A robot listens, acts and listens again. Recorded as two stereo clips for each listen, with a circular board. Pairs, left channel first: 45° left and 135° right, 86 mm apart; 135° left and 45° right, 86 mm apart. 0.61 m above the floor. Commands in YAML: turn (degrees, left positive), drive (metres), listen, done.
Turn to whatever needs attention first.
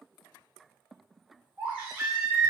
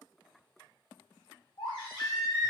turn: 150
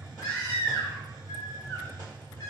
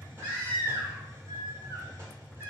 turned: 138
turn: 15
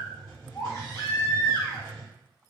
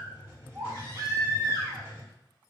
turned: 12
done: "Found it: a baby crying, straight ahead, 1 to 2 m away."